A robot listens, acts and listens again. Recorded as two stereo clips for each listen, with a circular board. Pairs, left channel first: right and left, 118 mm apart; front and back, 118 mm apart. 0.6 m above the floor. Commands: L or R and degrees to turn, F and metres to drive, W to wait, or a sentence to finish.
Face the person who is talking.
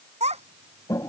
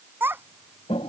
L110
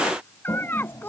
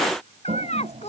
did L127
R15
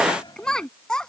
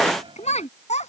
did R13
Facing the child speaking.